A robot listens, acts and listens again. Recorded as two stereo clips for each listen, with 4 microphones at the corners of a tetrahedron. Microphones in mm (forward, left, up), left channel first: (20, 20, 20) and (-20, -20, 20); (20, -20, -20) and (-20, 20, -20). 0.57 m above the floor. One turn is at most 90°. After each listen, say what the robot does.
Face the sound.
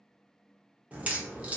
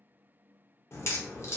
Turn 75° right.
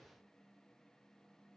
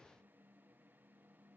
I heard a crack from this way, but can't make it out now.